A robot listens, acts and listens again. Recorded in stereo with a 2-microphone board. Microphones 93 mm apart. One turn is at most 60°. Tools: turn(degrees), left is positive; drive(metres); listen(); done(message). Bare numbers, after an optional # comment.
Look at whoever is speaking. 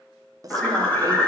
# The woman speaking: about 40° right or 140° right.
turn(-40)
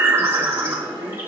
listen()
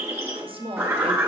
# So it is at 100° right.
turn(-60)
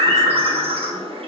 # Nothing new. It was at 40° right.
turn(-40)
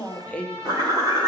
# The woman speaking is now 15° left.
turn(15)
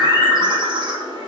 listen()
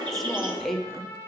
done("Found it: a woman speaking, straight ahead.")